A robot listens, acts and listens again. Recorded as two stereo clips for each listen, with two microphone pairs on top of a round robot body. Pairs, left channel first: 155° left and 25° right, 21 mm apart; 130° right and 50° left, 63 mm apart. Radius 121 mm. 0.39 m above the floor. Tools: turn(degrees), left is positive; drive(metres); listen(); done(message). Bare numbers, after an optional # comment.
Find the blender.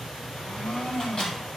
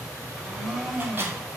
# The blender: 145° left.
turn(145)
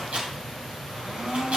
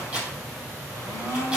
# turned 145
# The blender is now 15° left.
turn(15)
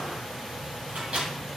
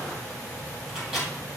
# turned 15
listen()
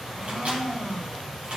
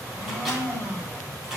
done("Found it: a blender, straight ahead.")